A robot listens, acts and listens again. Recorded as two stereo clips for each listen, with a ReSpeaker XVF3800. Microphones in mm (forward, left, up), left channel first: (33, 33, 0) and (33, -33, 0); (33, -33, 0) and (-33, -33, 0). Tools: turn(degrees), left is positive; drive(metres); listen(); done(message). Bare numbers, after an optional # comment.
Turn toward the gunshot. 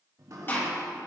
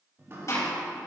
# The gunshot: 35° left.
turn(35)
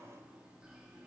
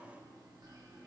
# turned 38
done("Facing where the gunshot came from. I can't hear it now.")